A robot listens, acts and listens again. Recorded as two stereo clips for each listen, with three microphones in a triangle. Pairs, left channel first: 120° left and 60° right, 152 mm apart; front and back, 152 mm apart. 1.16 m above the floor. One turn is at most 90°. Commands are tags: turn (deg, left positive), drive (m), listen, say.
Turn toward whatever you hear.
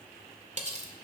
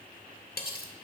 <turn deg="-15"/>
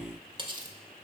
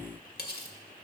<say>Facing the cutlery clinking, 1 to 2 m away.</say>